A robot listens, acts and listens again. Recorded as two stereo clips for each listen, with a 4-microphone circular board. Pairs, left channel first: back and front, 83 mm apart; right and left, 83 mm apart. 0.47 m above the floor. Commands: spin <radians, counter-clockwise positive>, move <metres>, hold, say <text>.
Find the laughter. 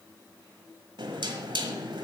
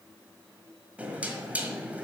hold
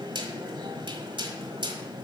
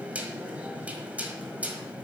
hold
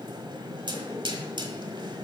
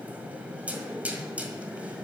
say I can't make out laughter, only knocking.